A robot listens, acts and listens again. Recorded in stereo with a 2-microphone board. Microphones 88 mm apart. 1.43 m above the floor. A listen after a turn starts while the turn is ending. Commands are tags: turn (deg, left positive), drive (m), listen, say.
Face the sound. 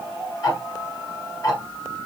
<turn deg="45"/>
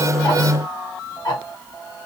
<turn deg="85"/>
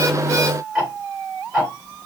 <turn deg="-10"/>
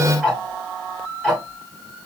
<say>Facing the ticking.</say>